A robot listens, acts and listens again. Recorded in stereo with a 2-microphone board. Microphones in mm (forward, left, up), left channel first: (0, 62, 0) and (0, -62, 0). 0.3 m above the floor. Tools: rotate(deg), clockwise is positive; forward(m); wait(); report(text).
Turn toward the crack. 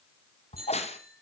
rotate(-60)
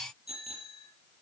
wait()
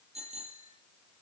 report("I heard a crack, but can't make it out now. It was about straight ahead or 60° left.")